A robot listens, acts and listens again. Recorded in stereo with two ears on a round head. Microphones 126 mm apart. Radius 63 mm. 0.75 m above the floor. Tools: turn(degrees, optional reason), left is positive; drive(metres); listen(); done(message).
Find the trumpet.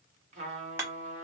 turn(degrees=-50, reason="The trumpet: about 50° right or 130° right.")
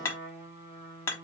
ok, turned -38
turn(degrees=-15, reason="So it is at 15° right.")
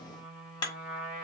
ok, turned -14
done("Found it: a trumpet, straight ahead.")